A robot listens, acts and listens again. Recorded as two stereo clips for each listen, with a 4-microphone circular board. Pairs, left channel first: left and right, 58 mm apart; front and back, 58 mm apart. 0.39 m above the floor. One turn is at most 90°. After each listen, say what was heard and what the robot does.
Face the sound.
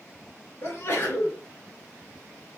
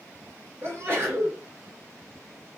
The sneeze: 140° left. Turn 90° left.
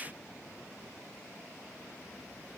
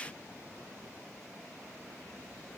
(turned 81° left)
Nothing new. It was at 55° left. Turn 55° left.
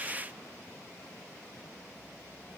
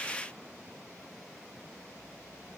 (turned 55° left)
I heard a sneeze from this way, but can't make it out now.